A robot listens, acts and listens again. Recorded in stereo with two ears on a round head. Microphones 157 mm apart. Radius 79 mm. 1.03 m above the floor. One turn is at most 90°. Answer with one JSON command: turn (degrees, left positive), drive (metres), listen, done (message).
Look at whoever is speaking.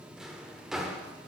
{"listen": true}
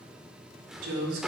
{"turn": -90}
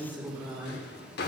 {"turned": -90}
{"done": "Found it: a woman speaking, straight ahead."}